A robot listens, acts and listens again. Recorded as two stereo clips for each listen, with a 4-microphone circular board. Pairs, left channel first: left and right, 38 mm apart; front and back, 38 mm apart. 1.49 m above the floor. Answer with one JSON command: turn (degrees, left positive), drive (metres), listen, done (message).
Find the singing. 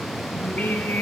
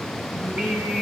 {"turn": 130}
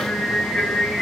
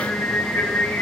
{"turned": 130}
{"turn": 25}
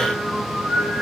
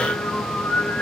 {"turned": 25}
{"done": "Facing the singing."}